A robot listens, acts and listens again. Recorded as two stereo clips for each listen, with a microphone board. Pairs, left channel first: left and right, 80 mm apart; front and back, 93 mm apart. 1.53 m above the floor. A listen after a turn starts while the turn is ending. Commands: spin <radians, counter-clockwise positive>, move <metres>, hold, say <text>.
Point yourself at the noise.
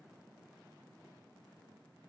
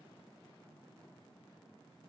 hold
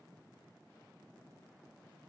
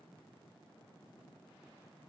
hold
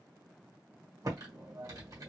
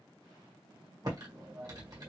spin -2.36
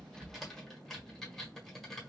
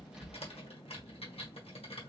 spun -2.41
say Facing the typing on a keyboard.